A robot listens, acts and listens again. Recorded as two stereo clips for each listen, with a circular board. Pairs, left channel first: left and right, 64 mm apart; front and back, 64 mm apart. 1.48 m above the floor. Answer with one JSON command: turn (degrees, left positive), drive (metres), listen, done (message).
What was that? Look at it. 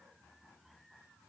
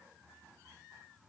{"listen": true}
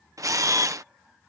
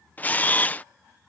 {"turn": -65}
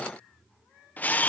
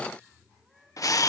{"turn": 25}
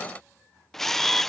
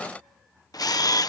{"done": "Found it: a camera shutter, straight ahead."}